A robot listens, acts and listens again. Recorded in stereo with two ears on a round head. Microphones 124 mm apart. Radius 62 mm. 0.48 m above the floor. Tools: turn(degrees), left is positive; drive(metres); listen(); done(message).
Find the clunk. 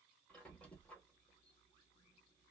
listen()
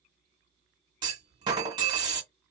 turn(degrees=-30)
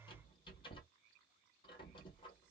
listen()
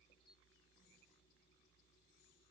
done("I heard a clunk, but can't make it out now. It was about straight ahead or 120° right.")